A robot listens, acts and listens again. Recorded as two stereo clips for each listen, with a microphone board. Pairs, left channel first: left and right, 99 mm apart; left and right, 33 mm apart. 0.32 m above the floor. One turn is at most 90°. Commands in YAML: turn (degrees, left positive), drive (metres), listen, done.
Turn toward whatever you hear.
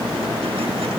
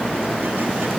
listen: true
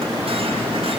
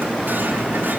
listen: true
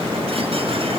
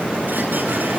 done: "I can't make out anything to turn to."